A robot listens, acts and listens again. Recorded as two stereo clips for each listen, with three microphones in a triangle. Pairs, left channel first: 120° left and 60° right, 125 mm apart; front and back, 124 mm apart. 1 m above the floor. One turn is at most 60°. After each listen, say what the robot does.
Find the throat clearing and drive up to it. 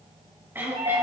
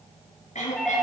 Turn 15° left.
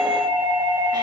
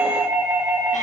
Keep listening.
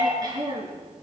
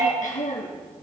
Drive 1.0 m forward.
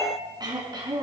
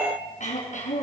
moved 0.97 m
Drive 1.0 m forward.
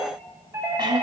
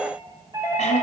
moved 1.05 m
Turn 10° right.
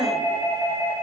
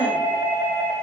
Keep listening.
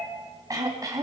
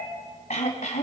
Drive 1.0 m forward.
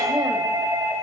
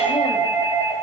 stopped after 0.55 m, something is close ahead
Keep listening.
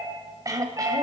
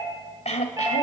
Arrived at the throat clearing, straight ahead.